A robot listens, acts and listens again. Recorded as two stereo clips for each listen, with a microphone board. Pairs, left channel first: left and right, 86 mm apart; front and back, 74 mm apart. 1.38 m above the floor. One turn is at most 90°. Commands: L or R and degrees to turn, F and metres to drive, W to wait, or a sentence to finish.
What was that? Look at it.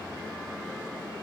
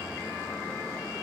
W
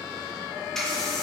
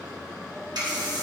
L90
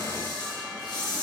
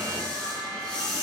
L75
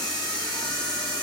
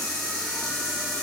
L15
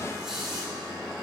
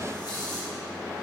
W
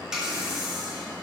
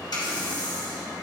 Found it: a running tap, straight ahead.